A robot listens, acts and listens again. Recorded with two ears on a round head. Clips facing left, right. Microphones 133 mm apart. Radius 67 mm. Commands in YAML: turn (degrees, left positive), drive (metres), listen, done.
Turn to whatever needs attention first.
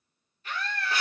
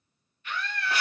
turn: 30
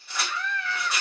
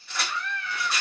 turn: 115
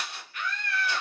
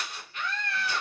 turn: -25
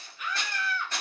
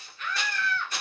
turn: 10
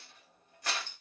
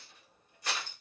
listen: true
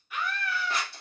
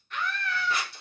done: "Facing the scream."